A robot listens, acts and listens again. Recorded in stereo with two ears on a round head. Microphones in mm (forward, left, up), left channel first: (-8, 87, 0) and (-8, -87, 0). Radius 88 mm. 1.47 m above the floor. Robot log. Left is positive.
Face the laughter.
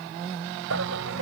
cmd yaw -90
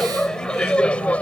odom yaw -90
end: Found it: laughter, straight ahead.